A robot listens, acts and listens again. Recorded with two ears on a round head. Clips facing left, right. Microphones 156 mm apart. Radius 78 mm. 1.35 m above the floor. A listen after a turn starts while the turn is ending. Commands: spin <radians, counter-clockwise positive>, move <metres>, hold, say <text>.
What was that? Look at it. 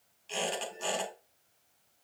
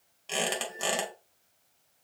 spin -1.13
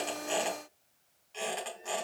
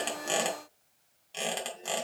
spin -0.79
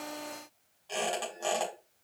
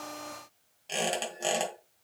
spin -0.44
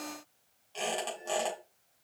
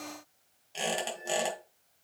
spin -0.26
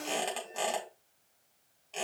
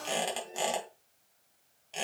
say Facing the squeak.